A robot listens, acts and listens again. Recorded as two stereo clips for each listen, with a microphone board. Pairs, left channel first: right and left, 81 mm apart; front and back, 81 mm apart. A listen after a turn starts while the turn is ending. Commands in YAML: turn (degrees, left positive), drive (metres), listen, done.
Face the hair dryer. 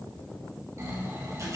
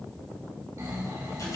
listen: true
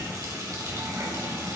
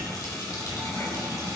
listen: true
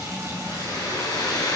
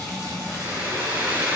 turn: -120
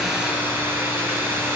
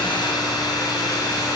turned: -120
turn: 30
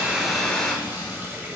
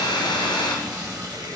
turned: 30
turn: -10
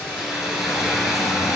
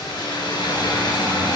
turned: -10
done: "Facing the hair dryer."